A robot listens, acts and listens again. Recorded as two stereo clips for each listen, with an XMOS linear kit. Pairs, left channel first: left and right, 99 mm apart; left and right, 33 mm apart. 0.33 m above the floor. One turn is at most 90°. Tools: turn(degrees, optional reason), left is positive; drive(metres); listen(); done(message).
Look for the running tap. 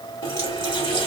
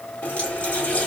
turn(degrees=60, reason="The running tap: about 60° left or 120° left.")
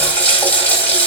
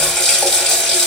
turn(degrees=15, reason="So it is at 15° left.")
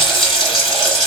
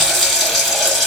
done("Found it: a running tap, straight ahead, 1 to 2 m away.")